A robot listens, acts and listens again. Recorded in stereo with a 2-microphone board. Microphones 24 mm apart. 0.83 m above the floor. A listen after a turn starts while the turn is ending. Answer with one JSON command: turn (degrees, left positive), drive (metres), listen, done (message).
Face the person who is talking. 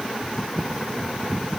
{"listen": true}
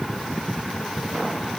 {"listen": true}
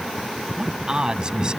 {"turn": -25}
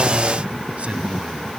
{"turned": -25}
{"turn": -135}
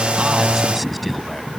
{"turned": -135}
{"done": "Found it: a man speaking, straight ahead."}